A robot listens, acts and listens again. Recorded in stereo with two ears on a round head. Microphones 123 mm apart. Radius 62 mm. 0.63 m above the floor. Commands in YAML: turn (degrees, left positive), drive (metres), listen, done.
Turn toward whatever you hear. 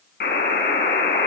turn: 90
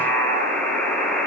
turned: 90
turn: 10
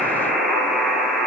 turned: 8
done: "Facing the buzzer, over 4 m away."